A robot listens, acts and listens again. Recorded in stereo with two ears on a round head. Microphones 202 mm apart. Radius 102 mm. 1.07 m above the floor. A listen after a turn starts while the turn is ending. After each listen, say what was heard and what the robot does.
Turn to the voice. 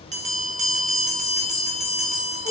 Keep listening.
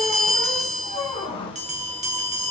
Keep listening.
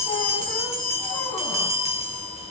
I can't make out anyone speaking to turn to.